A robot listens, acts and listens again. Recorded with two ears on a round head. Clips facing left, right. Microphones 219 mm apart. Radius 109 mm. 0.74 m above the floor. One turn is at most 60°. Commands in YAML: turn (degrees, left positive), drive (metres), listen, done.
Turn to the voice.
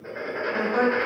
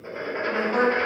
turn: -60
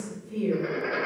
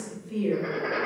turn: -25
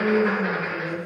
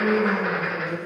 turn: -10
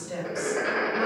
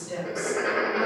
done: "Found it: a woman speaking, straight ahead."